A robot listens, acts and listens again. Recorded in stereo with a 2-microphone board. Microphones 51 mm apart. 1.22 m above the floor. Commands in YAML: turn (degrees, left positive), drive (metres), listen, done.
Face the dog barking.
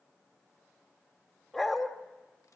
turn: 30
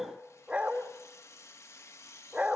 turn: -25
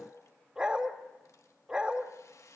turn: -15
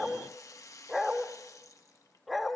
done: "Facing the dog barking."